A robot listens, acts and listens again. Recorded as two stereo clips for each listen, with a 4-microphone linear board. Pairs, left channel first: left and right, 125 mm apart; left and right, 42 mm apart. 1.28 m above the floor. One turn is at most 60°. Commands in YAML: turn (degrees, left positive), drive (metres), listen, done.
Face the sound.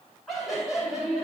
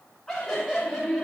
turn: -30
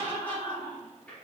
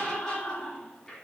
turn: 10
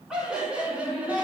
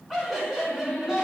turn: -15
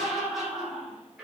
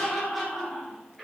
done: "Facing the laughter, over 4 m away."